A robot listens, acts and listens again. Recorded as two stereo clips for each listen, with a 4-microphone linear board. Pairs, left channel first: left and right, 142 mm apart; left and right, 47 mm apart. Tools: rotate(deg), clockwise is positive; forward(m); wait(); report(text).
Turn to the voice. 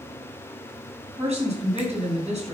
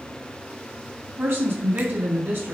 rotate(50)
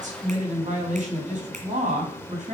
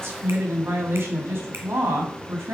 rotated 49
rotate(75)
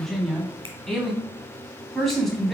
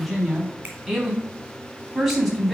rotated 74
report("Facing the woman speaking, 2 to 4 m away.")